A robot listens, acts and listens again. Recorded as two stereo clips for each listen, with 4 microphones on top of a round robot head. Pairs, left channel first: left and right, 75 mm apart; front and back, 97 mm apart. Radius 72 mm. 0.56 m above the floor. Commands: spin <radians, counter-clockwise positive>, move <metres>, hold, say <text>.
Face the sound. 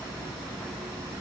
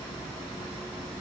hold
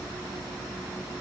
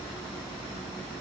hold
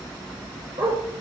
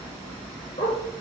spin -0.70
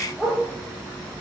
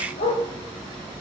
say Facing the dog barking.